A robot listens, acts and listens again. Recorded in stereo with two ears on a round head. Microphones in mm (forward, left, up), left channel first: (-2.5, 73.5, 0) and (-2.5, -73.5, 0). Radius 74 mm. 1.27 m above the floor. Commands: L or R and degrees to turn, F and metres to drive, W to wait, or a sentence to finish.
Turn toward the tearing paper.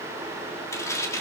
L20
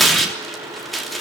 Found it: tearing paper, straight ahead.